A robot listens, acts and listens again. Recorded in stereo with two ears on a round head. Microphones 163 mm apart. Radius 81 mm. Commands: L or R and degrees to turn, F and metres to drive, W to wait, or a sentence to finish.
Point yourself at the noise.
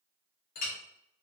L50
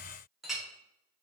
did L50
Facing the clink, under 1 m away.